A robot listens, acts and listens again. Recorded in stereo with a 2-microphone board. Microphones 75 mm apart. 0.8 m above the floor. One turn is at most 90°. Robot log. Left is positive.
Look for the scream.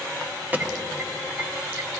cmd idle
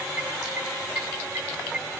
cmd idle
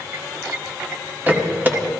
end: I can't make out a scream to turn to.